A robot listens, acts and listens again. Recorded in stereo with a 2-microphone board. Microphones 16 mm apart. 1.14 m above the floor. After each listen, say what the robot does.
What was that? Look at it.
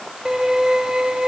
Turn 45° right.
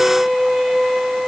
Facing the violin.